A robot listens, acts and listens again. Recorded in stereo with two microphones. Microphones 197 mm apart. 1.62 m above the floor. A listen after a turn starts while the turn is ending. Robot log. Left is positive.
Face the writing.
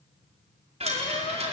cmd idle
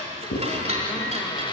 note: The writing: about 70° left or 110° left.
cmd yaw +70
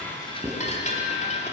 cmd idle
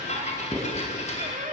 end: Facing the writing.